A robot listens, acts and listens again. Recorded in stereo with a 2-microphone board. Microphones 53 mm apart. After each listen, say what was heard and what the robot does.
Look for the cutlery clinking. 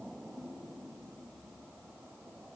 Keep listening.
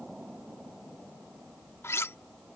The cutlery clinking: about 55° left or 125° left. Turn 55° left.
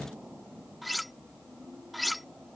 Facing the cutlery clinking.